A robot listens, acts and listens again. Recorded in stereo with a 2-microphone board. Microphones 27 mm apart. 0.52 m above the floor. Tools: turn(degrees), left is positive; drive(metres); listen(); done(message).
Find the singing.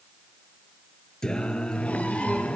turn(degrees=45)
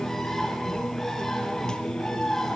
turn(degrees=35)
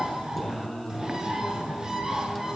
done("Facing the singing, 2 to 4 m away.")